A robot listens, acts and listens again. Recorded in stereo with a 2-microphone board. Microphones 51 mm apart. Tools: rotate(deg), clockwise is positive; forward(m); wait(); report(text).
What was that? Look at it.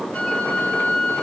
rotate(-25)
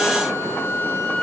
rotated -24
rotate(-130)
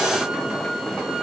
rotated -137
rotate(10)
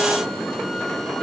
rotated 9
wait()
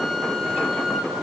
report("Facing the flute.")